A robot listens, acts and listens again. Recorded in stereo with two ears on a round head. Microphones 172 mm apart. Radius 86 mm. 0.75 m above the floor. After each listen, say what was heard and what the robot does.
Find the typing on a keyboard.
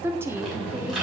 Turn 30° right.
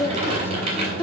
So it is at 150° right. Turn 150° right.
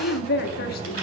The typing on a keyboard is now 50° right. Turn 50° right.
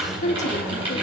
The typing on a keyboard is now 25° right. Turn 25° right.
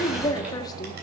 Keep listening.
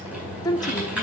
Found it: typing on a keyboard, straight ahead, over 4 m away.